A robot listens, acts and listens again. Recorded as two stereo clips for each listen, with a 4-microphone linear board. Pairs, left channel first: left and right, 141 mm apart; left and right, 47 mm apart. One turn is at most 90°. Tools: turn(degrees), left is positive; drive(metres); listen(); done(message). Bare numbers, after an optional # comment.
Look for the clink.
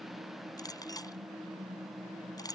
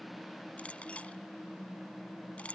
# The clink: about 25° left or 155° left.
turn(25)
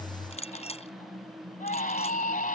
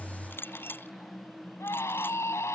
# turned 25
# So it is at 130° left.
turn(90)
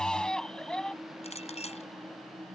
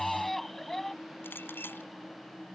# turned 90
# The clink is now 50° left.
turn(50)
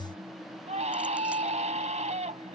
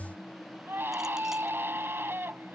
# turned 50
listen()
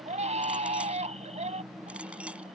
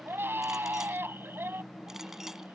listen()
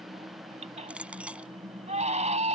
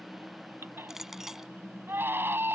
# The clink is now 10° right.
turn(-10)
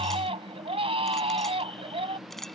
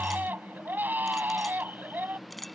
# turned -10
done("Found it: a clink, straight ahead.")